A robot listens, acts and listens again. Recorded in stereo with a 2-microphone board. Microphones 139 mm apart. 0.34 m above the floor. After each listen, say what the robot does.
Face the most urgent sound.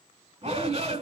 Turn 45° right.
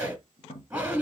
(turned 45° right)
Turn 10° right.
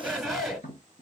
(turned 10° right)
Facing the shout, 1 to 2 m away.